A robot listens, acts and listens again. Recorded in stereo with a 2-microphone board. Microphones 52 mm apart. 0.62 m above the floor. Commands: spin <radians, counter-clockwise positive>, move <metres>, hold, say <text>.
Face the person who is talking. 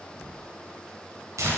hold
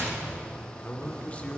spin 0.44
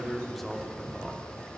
say Facing the man speaking.